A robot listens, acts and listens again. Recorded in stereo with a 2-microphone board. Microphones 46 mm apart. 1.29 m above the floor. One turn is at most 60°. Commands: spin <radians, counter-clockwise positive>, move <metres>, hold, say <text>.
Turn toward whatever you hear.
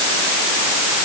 hold
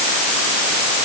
hold
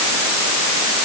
say I can't make out anything.